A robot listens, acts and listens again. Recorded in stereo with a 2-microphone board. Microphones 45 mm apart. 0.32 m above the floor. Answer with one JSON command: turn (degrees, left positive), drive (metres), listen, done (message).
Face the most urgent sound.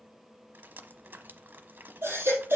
{"turn": -55}
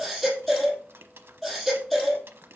{"done": "Facing the baby crying, 2 to 4 m away."}